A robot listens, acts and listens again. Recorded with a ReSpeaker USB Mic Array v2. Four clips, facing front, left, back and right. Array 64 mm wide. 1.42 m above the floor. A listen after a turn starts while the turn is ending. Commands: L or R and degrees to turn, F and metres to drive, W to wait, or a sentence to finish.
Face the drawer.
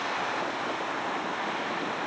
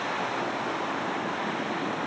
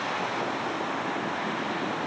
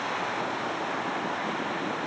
W
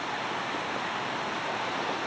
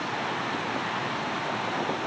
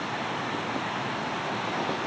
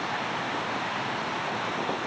W
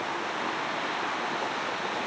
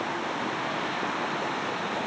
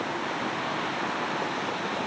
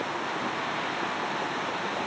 I can't make out a drawer to turn to.